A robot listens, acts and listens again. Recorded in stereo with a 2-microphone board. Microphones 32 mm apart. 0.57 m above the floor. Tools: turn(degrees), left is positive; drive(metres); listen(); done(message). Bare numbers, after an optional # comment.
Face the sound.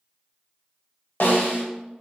turn(90)
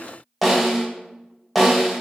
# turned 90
done("Facing the snare drum, under 1 m away.")